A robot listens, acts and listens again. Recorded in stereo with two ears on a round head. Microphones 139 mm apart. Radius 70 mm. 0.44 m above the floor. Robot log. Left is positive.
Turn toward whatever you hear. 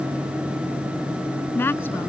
cmd yaw +30
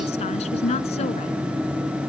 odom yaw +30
note: So it is at 135° left.
cmd yaw +135
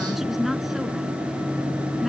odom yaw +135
cmd idle
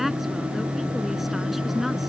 end: Found it: a woman speaking, straight ahead.